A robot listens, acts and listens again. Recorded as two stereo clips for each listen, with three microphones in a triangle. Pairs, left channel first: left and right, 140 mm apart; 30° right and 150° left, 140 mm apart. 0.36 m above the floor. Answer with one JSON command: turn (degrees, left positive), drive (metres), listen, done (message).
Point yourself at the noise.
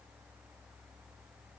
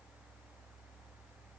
{"listen": true}
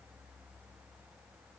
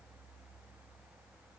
{"listen": true}
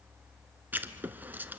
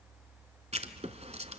{"turn": -165}
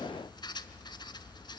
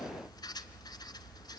{"turn": 30}
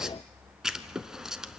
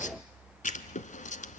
{"done": "Facing the writing, 1 to 2 m away."}